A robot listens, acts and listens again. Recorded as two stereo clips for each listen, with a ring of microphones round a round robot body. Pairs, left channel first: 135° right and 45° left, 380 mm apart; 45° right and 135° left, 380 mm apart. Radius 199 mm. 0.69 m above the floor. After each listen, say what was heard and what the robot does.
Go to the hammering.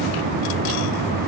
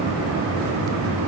Keep listening.
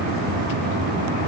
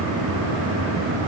Keep listening.
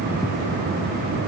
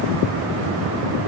I can't make out hammering to turn to.